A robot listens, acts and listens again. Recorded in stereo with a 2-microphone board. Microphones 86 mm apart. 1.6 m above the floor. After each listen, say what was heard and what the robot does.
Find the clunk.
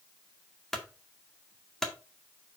Turn 30° left.
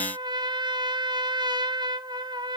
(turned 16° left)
Keep listening.
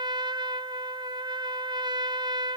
I heard a clunk, but can't make it out now. It was about 15° right or 165° left.